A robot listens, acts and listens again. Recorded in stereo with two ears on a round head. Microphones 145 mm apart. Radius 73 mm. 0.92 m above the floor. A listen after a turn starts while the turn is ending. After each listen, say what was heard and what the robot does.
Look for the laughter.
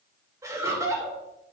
The laughter: about 20° right or 160° right. Turn 20° right.
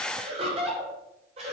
The laughter: about 40° right or 140° right. Turn 40° right.
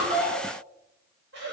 So it is at 100° right. Turn 100° right.
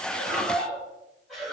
Found it: laughter, straight ahead.